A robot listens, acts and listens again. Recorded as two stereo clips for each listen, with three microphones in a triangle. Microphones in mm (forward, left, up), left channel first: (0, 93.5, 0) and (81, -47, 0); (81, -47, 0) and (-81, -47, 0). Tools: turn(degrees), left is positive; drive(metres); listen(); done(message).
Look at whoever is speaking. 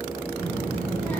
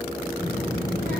turn(degrees=-155)
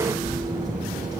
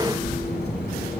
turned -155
turn(degrees=10)
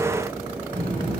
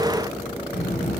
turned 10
done("Facing the child speaking.")